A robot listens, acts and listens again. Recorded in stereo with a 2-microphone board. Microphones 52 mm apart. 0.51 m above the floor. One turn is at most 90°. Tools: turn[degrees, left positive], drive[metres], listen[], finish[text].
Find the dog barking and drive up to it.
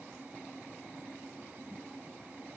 Action: listen[]
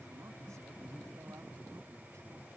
Action: listen[]
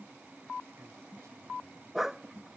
Action: turn[-30]
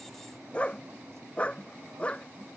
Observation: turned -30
Thought: So it is at 25° left.
Action: turn[25]
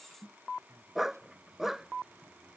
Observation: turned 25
Action: drive[1.0]
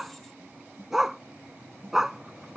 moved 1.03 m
Thought: The dog barking is now 10° right.
Action: turn[-10]
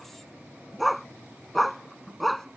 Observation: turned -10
Action: drive[1.0]
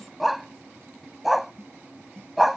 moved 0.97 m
Action: drive[1.0]
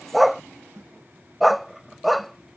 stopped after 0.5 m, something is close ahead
Action: finish[Arrived at the dog barking, straight ahead.]